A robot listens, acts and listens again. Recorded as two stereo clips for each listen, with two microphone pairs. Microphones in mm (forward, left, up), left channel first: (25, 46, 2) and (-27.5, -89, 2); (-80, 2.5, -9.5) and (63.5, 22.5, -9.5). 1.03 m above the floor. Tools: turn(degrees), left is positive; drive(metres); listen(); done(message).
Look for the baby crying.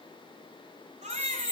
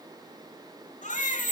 turn(degrees=-145)
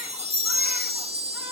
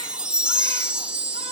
listen()
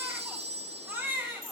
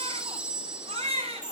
turn(degrees=-35)
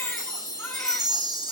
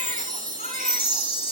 listen()
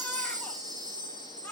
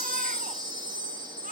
turn(degrees=-10)
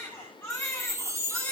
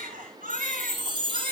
done("Facing the baby crying, over 4 m away.")